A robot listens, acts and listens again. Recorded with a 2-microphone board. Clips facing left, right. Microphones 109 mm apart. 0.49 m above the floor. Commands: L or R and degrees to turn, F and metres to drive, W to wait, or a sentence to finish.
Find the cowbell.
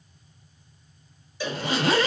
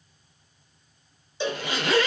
R25
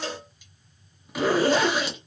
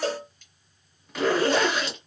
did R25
R125
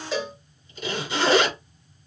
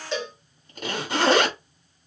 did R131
Found it: a cowbell, straight ahead, 1 to 2 m away.